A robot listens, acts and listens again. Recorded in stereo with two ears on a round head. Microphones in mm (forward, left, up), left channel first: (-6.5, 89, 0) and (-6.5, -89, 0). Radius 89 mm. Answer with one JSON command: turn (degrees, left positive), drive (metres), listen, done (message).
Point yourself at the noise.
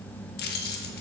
{"turn": 50}
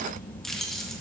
{"done": "Facing the keys jangling."}